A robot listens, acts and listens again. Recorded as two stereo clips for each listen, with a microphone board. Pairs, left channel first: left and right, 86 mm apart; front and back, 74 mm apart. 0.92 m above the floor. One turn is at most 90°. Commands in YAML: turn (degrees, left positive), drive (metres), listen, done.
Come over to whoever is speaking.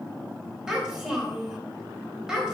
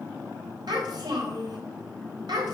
turn: -90
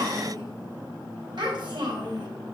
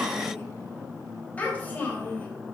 turn: -65
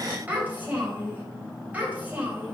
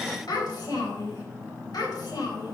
turn: -20
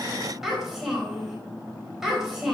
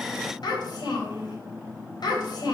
drive: 1.0
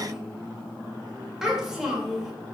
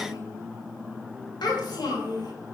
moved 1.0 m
drive: 1.0
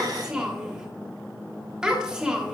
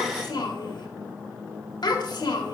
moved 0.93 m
drive: 1.0
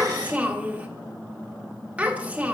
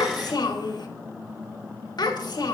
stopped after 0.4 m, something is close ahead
turn: -15
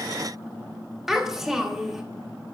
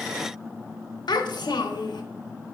done: "Arrived at the child speaking, straight ahead."